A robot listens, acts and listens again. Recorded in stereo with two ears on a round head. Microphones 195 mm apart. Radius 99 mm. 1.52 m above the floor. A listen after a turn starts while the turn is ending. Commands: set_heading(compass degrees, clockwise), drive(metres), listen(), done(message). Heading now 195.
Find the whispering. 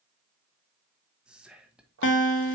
set_heading(225)
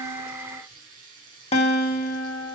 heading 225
listen()
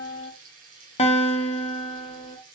listen()
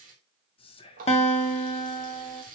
set_heading(200)
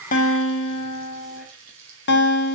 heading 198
listen()
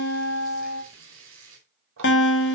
listen()
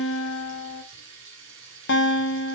done("Facing where the whispering came from. I can't hear it now.")